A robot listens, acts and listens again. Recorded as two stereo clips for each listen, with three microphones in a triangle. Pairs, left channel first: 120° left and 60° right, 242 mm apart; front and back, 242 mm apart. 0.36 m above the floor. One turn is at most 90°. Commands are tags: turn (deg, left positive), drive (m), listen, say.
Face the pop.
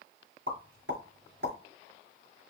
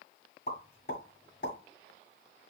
<turn deg="-40"/>
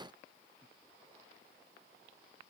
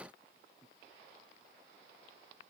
<say>I heard a pop from this way, but can't make it out now.</say>